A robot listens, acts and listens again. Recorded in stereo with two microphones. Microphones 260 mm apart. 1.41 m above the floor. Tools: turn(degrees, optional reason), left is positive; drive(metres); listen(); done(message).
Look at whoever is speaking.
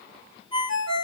listen()
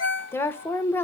turn(degrees=30)
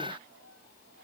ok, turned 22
listen()
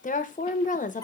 turn(degrees=150, reason="So it is at 150° left.")
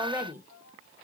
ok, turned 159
turn(degrees=-10, reason="The woman speaking is now 10° right.")
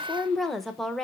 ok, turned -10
done("Found it: a woman speaking, straight ahead, 1 to 2 m away.")